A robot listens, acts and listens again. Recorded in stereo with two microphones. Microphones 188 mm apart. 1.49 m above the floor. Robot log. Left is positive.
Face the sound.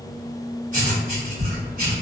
note: The writing: about 45° right or 135° right.
cmd yaw -45
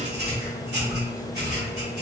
note: So it is at 85° right.
cmd yaw -85
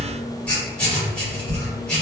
end: Facing the writing.